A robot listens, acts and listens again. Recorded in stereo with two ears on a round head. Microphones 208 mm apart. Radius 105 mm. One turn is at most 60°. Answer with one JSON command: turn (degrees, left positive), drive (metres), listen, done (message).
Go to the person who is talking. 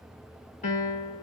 {"listen": true}
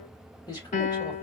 {"turn": 20}
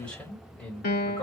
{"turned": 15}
{"drive": 1.0}
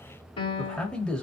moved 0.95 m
{"drive": 1.0}
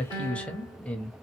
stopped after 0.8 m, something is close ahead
{"done": "Arrived at the man speaking, straight ahead."}